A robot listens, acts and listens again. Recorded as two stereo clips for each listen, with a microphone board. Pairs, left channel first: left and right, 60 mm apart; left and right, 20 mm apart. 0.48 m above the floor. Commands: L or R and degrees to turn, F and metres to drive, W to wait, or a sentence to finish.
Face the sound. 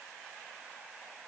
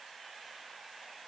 W
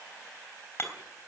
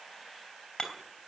L45
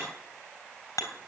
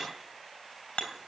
L90
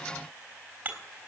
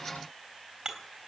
R30
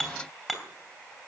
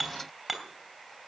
Found it: hammering, straight ahead, 2 to 4 m away.